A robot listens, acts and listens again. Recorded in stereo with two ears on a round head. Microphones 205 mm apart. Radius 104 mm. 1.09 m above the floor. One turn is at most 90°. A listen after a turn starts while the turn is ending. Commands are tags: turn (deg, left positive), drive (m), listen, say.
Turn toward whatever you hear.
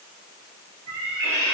<turn deg="-75"/>
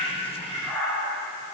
<say>Found it: a cat meowing, straight ahead, 1 to 2 m away.</say>